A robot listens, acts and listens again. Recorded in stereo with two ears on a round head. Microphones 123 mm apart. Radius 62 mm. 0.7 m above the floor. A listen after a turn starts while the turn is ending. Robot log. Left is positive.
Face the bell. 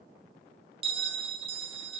note: The bell: about 40° right or 140° right.
cmd yaw -40
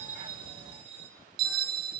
note: So it is at 95° right.
cmd yaw -95
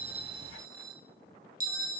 note: The bell is now 20° right.
cmd yaw -20
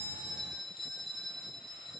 end: Found it: a bell, straight ahead.